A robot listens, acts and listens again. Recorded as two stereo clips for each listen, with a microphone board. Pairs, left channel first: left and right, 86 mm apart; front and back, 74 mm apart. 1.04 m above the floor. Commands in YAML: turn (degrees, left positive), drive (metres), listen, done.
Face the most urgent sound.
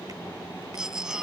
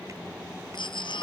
done: "Found it: a baby crying, straight ahead."